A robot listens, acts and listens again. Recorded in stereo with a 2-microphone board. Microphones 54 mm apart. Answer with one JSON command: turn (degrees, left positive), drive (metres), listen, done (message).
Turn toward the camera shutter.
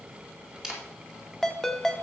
{"turn": -30}
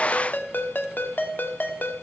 {"listen": true}
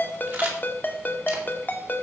{"listen": true}
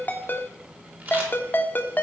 {"turn": -145}
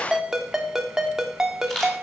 {"turn": 10}
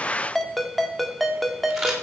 {"done": "Facing the camera shutter."}